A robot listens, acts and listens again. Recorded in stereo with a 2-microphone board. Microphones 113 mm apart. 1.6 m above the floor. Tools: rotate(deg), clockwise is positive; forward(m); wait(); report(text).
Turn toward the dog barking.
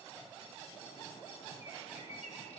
wait()
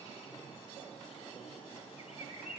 wait()
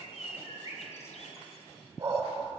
rotate(45)
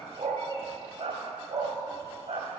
rotate(65)
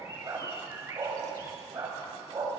rotate(25)
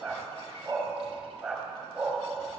report("Facing the dog barking.")